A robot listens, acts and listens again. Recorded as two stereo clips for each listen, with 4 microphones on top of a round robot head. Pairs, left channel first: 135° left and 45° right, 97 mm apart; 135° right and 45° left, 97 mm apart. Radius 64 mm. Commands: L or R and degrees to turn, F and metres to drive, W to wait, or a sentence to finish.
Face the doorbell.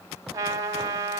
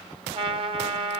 W
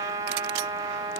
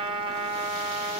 W
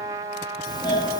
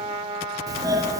L95
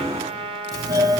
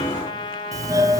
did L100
Found it: a doorbell, straight ahead.